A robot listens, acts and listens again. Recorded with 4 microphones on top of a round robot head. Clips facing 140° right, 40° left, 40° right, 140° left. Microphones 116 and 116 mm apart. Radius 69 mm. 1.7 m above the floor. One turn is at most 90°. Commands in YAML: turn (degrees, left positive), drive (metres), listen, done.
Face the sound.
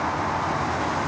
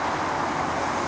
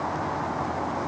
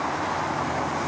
listen: true
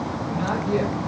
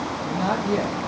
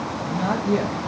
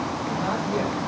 done: "Facing the man speaking, 2 to 4 m away."